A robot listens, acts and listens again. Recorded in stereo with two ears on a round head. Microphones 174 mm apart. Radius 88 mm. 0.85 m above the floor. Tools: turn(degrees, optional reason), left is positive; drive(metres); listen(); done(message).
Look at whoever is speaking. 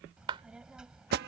turn(degrees=-30)
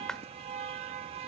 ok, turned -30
listen()
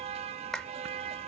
listen()
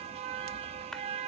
done("I heard a child speaking, but can't make it out now. It was about 25° left or 145° right.")